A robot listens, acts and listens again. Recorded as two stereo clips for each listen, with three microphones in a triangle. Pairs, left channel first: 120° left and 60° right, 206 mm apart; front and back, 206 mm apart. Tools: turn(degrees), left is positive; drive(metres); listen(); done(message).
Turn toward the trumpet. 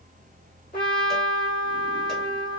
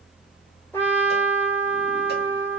turn(degrees=75)
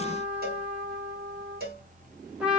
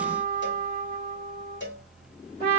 turn(degrees=25)
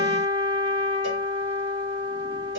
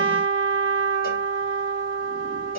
done("Found it: a trumpet, straight ahead, 1 to 2 m away.")